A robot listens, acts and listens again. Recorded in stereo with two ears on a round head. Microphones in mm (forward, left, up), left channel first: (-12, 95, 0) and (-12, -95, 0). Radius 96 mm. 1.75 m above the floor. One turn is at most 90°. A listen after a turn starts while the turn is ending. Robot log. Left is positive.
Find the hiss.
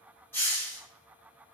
cmd yaw +30
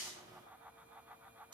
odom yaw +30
note: So it is at 25° right.
cmd yaw -25
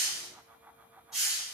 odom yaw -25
end: Facing the hiss.